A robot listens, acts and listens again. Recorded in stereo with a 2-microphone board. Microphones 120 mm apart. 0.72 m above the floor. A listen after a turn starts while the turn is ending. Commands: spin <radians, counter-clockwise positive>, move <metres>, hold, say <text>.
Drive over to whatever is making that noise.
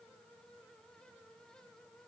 hold
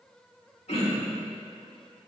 spin 1.13
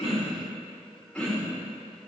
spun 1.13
spin 0.17
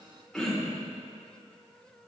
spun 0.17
move 1.0
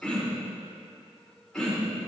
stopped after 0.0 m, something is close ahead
say Blocked. The throat clearing is further on, straight ahead.